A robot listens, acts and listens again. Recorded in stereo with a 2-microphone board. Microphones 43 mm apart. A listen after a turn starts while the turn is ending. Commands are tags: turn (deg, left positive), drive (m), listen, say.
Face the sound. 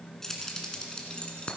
<turn deg="25"/>
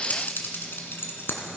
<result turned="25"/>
<turn deg="115"/>
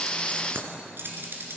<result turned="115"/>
<turn deg="-65"/>
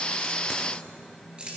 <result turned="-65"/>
<turn deg="-25"/>
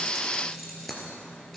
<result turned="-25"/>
<say>Facing the keys jangling.</say>